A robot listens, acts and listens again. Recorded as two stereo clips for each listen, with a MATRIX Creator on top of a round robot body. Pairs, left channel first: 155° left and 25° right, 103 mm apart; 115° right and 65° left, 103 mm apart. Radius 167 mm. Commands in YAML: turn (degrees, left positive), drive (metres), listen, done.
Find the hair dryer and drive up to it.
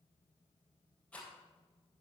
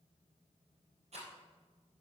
listen: true
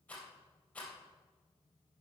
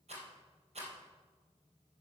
listen: true
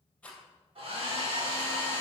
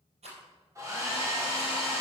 drive: 1.0
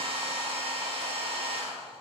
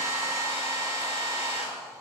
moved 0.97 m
drive: 1.0
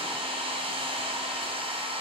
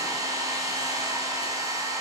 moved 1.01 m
turn: 10
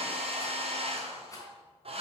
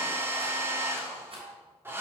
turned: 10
drive: 1.0
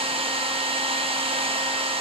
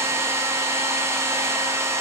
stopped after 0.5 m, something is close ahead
done: "I am next to the hair dryer."